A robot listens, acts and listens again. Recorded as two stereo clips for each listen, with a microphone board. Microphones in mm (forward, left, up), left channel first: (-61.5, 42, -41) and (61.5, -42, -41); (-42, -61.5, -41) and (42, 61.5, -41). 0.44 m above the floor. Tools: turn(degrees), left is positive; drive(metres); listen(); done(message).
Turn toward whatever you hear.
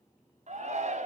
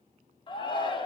turn(degrees=-70)
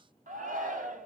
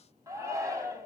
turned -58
turn(degrees=-15)
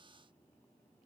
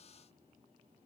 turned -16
listen()
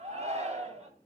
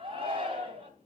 done("Found it: a shout, straight ahead.")